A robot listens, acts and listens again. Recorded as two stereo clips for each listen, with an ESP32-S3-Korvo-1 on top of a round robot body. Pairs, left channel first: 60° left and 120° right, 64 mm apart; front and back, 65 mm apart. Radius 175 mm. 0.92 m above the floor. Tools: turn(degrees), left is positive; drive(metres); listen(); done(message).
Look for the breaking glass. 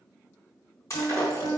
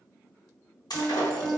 turn(degrees=20)
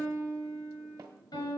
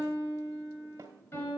done("I heard breaking glass from this way, but can't make it out now.")